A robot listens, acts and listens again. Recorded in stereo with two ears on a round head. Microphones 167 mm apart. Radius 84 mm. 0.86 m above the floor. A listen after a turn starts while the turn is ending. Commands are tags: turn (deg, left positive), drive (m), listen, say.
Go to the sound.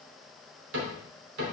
<turn deg="-65"/>
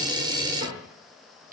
<turn deg="-45"/>
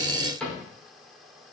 <drive m="1.0"/>
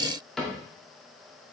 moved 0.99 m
<drive m="1.0"/>
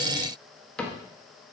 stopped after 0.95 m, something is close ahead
<turn deg="10"/>
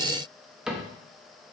<say>Arrived at the cupboard door, straight ahead.</say>